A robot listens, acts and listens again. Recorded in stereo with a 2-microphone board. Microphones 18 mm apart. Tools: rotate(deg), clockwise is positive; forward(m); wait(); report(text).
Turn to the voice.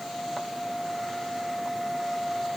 wait()
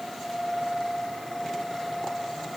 wait()
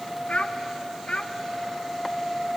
rotate(-65)
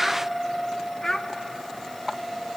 rotate(-20)
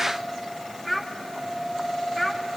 report("Found it: a child speaking, straight ahead, 1 to 2 m away.")